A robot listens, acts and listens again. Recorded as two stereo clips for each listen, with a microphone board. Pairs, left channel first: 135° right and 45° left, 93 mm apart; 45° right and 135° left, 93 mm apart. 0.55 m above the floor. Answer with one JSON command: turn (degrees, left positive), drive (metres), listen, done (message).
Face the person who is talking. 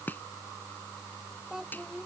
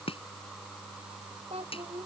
{"turn": 130}
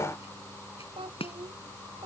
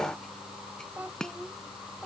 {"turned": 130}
{"turn": 60}
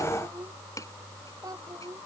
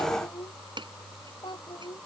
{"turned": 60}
{"done": "Found it: a child speaking, straight ahead."}